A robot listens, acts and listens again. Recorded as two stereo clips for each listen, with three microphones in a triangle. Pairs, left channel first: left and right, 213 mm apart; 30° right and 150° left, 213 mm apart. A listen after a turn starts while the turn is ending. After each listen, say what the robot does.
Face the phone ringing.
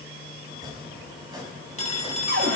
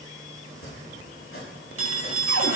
Turn 150° left.
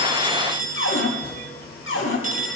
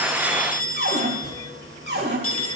Turn 35° right.
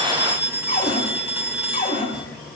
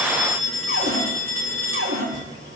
Found it: a phone ringing, straight ahead.